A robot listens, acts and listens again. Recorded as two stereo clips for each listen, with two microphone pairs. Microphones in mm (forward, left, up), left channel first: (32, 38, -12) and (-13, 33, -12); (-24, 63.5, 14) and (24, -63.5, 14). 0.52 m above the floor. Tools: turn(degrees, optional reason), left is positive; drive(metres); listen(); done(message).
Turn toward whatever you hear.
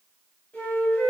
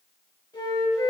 turn(degrees=60, reason="The flute: 60° left.")
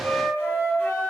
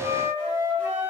done("Found it: a flute, straight ahead.")